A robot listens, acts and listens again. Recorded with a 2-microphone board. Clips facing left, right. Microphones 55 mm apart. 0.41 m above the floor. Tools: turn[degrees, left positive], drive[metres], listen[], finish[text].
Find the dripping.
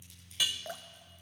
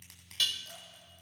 Thought: The dripping: about 70° left or 110° left.
Action: turn[70]
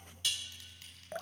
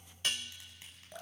Thought: So it is at 35° left.
Action: turn[35]
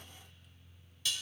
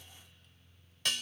Action: listen[]
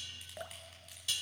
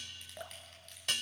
Action: finish[Facing the dripping, under 1 m away.]